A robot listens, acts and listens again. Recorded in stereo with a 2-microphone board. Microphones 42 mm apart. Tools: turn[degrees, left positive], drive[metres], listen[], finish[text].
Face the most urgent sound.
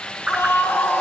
Thought: The scream: about 70° left or 110° left.
Action: turn[70]
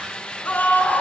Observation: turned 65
Thought: So it is at 45° left.
Action: turn[45]
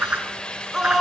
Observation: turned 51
Thought: The scream is now 10° right.
Action: turn[-10]
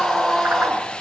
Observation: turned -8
Action: finish[Found it: a scream, straight ahead.]